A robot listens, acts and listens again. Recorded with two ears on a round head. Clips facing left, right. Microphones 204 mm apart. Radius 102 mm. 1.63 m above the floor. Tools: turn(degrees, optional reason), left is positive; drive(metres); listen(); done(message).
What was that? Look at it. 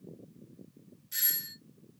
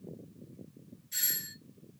turn(degrees=15, reason="The doorbell: about 15° left or 165° left.")
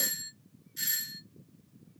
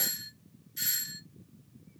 done("Found it: a doorbell, straight ahead, under 1 m away.")